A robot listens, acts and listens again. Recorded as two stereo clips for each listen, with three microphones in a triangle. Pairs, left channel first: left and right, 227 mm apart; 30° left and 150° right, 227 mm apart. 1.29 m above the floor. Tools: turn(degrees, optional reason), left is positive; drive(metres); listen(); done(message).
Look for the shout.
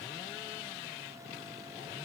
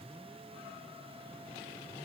listen()
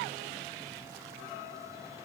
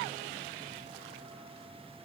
listen()
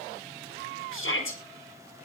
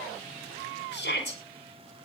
turn(degrees=70, reason="The shout: 70° left.")
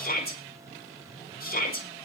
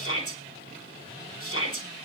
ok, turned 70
turn(degrees=45, reason="The shout is now 45° left.")
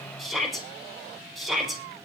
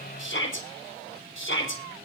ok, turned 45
done("Facing the shout.")